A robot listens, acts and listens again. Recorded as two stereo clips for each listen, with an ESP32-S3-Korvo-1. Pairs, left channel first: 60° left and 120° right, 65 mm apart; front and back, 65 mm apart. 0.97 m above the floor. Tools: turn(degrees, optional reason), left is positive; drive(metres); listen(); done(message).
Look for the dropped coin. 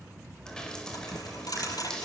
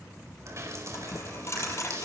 turn(degrees=45, reason="The dropped coin: 45° left.")
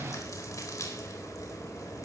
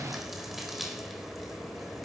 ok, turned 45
done("I heard a dropped coin from this way, but can't make it out now.")